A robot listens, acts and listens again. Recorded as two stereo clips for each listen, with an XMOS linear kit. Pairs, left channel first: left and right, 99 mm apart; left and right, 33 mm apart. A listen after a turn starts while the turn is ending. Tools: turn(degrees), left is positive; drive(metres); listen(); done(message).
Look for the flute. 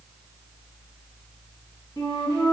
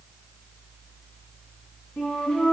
turn(degrees=35)
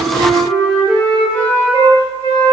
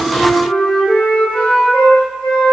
turn(degrees=110)
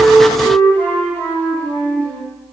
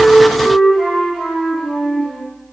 turn(degrees=15)
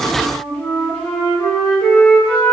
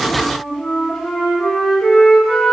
done("Facing the flute, 1 to 2 m away.")